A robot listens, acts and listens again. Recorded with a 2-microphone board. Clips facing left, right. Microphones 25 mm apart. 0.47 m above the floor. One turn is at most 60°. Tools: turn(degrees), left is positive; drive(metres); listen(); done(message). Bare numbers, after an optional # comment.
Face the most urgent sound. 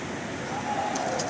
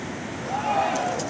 # The shout: about 35° right or 145° right.
turn(-35)
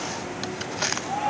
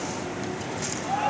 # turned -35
done("Found it: a shout, straight ahead.")